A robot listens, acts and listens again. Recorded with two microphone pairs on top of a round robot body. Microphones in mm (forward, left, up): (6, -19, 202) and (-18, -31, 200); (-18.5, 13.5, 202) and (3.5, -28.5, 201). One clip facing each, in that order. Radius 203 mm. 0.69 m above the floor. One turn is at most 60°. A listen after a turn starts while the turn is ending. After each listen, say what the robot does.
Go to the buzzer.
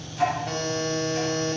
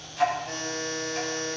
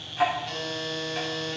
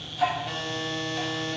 Turn 20° left.
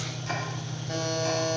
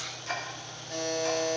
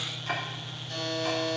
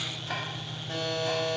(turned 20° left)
Drive 1.0 m forward.
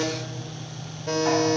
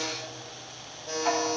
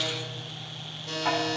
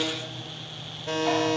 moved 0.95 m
Drive 1.0 m forward.
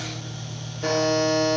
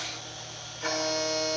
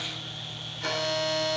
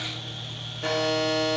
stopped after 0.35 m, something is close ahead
Arrived at the buzzer, straight ahead.